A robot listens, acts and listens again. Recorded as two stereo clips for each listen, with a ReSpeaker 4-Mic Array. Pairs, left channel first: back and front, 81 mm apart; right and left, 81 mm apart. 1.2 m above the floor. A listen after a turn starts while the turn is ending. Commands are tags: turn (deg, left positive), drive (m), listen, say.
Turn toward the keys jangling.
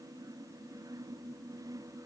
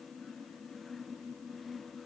<listen/>
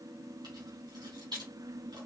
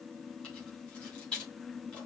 <turn deg="-10"/>
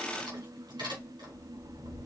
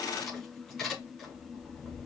<say>Facing the keys jangling, over 4 m away.</say>